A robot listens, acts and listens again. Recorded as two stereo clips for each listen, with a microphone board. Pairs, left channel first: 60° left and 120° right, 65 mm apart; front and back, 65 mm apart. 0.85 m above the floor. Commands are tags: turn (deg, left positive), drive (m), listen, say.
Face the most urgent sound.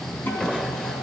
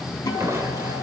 <listen/>
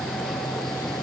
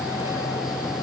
<listen/>
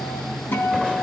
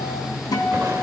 <say>I can't make out anything urgent to turn to.</say>